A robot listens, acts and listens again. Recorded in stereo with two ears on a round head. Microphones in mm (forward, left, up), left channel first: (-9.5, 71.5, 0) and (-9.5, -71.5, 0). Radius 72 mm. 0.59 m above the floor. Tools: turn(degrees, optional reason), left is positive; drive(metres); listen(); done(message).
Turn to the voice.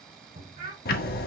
turn(degrees=-50, reason="The child speaking: about 50° right or 130° right.")
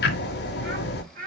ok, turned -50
turn(degrees=-55, reason="So it is at 55° right.")
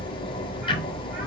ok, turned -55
listen()
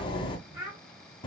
turn(degrees=-10, reason="The child speaking is now 10° right.")
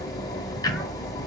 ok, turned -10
listen()
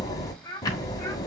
turn(degrees=10, reason="The child speaking is now 10° left.")
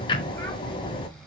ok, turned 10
listen()
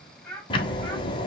done("Facing the child speaking.")